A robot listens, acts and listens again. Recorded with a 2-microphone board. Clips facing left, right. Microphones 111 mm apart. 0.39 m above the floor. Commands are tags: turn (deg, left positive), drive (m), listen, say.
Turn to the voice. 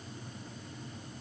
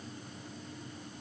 <listen/>
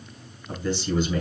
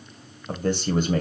<turn deg="-50"/>
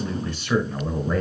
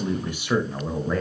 <say>Facing the man speaking.</say>